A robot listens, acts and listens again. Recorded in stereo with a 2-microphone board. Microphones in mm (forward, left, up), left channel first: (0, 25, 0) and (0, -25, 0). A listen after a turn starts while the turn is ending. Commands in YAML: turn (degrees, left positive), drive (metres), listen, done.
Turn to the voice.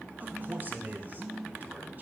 turn: -35
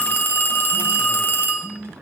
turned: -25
listen: true
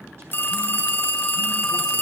listen: true
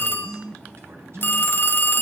done: "I heard a man speaking, but can't make it out now. It was about 10° right or 120° right."